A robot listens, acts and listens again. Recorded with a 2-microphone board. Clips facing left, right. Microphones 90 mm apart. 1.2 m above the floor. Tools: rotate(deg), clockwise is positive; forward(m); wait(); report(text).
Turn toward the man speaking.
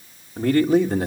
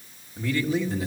rotate(-55)
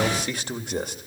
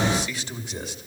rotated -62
rotate(-50)
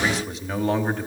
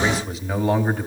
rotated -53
report("Facing the man speaking.")